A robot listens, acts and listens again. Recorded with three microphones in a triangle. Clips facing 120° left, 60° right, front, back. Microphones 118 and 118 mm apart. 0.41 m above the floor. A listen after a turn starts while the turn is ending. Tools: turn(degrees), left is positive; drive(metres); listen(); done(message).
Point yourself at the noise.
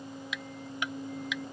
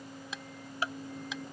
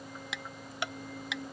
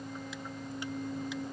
done("Found it: ticking, straight ahead.")